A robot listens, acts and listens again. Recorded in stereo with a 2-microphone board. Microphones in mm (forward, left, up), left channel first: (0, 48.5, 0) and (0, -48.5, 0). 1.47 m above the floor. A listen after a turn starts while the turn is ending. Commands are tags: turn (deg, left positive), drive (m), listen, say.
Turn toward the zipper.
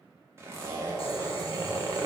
<turn deg="-30"/>
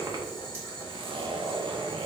<turn deg="-120"/>
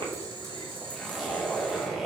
<say>Facing the zipper, under 1 m away.</say>